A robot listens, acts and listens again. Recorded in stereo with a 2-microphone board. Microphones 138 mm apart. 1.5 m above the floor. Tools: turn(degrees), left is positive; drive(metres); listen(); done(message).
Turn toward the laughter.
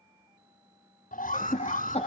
turn(degrees=50)
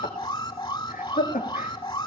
turn(degrees=85)
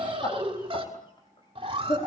turn(degrees=40)
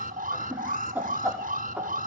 turn(degrees=-10)
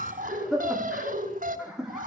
done("Found it: laughter, straight ahead.")